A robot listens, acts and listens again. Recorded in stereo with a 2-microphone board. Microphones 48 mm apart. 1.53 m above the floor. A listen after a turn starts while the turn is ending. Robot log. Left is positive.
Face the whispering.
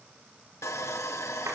cmd idle
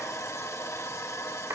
cmd idle
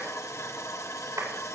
end: I can't make out whispering, only sawing and a clap.